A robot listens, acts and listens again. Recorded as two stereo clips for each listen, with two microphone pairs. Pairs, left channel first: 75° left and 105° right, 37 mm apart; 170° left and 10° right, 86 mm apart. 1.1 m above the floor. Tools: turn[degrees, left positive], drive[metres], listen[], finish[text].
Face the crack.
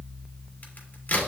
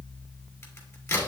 Thought: The crack: 115° left.
Action: turn[115]
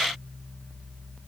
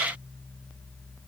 Action: finish[Facing where the crack came from. I can't hear it now.]